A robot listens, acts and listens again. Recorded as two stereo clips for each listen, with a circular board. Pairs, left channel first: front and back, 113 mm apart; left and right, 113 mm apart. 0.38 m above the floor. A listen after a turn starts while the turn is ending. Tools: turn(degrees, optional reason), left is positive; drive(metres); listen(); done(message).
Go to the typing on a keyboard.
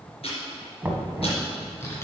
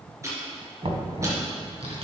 turn(degrees=-65, reason="The typing on a keyboard: 65° right.")
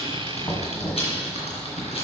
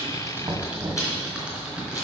turn(degrees=-10, reason="The typing on a keyboard is now 10° right.")
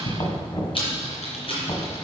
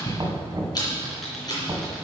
drive(metres=1.0)
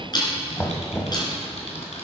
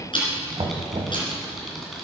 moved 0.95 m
drive(metres=1.0)
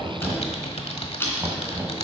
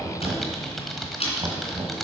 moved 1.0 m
drive(metres=1.0)
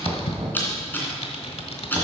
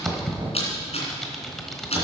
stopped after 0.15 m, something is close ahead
done("I am next to the typing on a keyboard.")